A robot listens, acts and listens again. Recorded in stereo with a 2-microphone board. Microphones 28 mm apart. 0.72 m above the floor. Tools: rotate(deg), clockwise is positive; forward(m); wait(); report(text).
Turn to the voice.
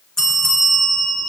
wait()
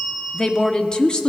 rotate(-30)
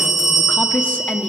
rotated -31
rotate(-120)
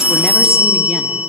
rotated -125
wait()
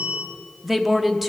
report("Found it: a woman speaking, straight ahead.")